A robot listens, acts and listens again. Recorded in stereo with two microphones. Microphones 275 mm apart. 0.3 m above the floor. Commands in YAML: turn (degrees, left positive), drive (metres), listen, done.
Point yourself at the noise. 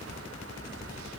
listen: true
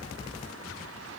listen: true
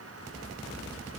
done: "I can't make out anything."